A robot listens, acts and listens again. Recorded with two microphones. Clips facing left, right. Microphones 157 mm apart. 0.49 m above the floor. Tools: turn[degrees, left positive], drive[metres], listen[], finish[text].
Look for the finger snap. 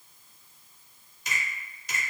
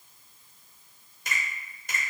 Thought: The finger snap: about 50° right or 130° right.
Action: turn[-50]
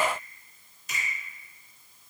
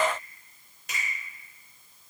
Thought: So it is at 70° right.
Action: turn[-70]
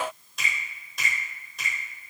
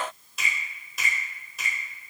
Action: finish[Found it: a finger snap, straight ahead, 1 to 2 m away.]